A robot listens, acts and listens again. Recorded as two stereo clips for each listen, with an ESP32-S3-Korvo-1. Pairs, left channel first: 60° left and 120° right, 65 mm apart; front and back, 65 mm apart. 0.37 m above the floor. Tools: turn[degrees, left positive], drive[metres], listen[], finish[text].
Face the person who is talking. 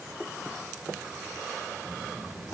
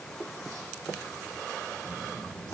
Thought: The child speaking: 135° left.
Action: turn[135]
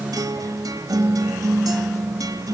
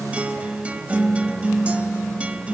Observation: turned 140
Action: listen[]
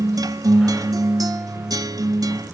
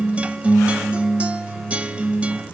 Action: finish[Found it: a child speaking, straight ahead.]